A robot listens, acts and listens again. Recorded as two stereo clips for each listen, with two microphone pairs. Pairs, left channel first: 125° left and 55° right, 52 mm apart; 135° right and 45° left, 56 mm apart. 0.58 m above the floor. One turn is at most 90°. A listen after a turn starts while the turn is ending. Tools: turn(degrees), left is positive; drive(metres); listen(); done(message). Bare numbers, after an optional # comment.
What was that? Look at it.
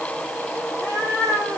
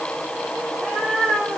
# The cat meowing: 140° left.
turn(90)
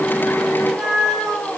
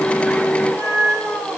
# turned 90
# The cat meowing is now 30° left.
turn(30)
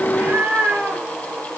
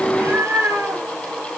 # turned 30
done("Facing the cat meowing, 2 to 4 m away.")